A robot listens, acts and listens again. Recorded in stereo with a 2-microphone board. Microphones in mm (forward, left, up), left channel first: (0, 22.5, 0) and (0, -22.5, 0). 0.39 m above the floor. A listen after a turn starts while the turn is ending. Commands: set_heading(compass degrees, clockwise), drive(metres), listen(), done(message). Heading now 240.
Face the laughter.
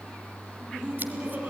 set_heading(260)
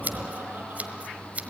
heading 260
set_heading(295)
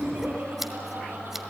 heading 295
set_heading(50)
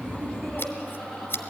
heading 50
done("Facing the laughter, over 4 m away.")